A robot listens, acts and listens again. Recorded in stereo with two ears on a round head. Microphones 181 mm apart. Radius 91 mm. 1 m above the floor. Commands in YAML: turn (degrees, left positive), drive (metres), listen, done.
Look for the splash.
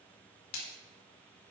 turn: 90
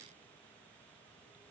done: "I heard a splash from this way, but can't make it out now."